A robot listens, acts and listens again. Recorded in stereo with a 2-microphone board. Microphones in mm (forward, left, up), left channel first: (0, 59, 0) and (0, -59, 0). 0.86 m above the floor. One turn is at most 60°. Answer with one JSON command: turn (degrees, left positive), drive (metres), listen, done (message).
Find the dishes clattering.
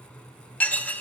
{"turn": 30}
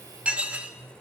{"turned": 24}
{"turn": -10}
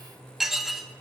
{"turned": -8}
{"done": "Found it: dishes clattering, straight ahead."}